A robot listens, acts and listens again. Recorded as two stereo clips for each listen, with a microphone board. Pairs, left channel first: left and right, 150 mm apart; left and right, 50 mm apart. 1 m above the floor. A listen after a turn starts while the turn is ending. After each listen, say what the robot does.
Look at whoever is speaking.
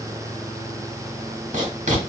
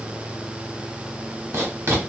Keep listening.
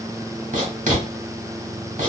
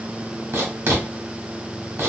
Keep listening.
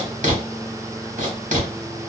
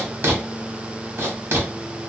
I can't make out anyone speaking, only writing.